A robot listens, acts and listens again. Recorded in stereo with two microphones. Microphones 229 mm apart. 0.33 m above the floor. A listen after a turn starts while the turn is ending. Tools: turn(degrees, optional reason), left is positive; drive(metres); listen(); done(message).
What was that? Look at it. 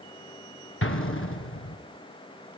turn(degrees=65, reason="The explosion: about 65° left or 115° left.")
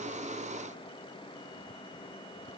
listen()
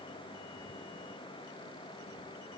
done("I heard an explosion, but can't make it out now. It was about straight ahead or 50° left.")